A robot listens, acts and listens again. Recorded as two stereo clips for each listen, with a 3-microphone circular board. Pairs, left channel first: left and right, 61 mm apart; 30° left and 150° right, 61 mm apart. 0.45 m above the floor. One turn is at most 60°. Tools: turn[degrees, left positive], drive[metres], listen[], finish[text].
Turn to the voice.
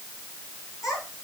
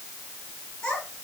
Thought: The child speaking: 105° left.
Action: turn[60]
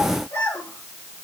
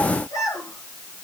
Thought: The child speaking is now 45° left.
Action: turn[45]
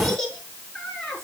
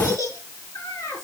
Thought: The child speaking is now 10° left.
Action: turn[10]
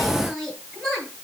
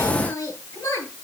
Action: finish[Found it: a child speaking, straight ahead.]